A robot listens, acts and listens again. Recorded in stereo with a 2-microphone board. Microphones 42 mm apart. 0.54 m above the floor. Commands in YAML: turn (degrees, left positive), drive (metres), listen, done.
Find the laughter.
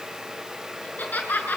turn: 45
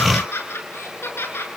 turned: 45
turn: 75
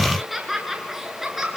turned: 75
turn: -10
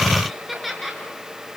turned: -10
done: "Found it: laughter, straight ahead, over 4 m away."